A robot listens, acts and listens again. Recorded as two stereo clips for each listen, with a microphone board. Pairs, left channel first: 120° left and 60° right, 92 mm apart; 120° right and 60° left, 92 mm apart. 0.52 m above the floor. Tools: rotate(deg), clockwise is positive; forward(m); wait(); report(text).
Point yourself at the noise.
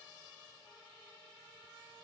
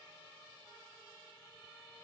wait()
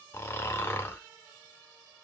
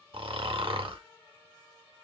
rotate(-60)
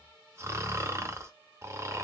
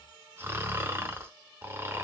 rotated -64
report("Facing the snoring, under 1 m away.")